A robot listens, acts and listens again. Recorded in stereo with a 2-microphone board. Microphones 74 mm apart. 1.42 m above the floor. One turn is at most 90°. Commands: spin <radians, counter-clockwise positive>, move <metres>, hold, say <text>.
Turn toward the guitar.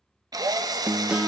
spin -0.52
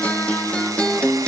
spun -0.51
spin 0.26
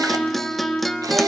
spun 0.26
say Found it: a guitar, straight ahead.